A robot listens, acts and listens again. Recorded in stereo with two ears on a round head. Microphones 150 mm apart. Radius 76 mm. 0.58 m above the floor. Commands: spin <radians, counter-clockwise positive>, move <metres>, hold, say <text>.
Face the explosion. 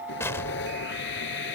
spin 0.26
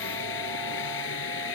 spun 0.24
hold
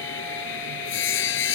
say I heard an explosion, but can't make it out now. It was about straight ahead or 150° left.